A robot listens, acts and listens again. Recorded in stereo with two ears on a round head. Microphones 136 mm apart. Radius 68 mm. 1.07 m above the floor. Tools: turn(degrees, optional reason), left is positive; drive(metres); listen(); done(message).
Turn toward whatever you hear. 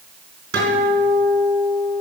turn(degrees=-90)
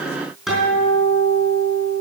done("Facing the guitar.")